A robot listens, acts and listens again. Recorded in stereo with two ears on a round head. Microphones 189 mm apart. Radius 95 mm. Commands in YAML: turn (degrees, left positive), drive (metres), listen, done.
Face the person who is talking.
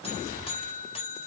listen: true
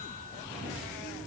listen: true
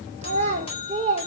turn: -25
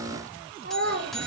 turn: -40
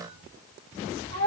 turn: -115
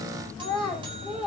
done: "Found it: a child speaking, straight ahead, 2 to 4 m away."